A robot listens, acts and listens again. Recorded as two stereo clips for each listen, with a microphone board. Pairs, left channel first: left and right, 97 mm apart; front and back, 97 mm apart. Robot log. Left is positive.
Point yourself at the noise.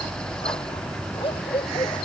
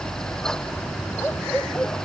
note: The dog barking: 75° left.
cmd yaw +75
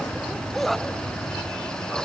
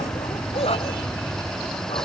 end: Found it: a dog barking, straight ahead.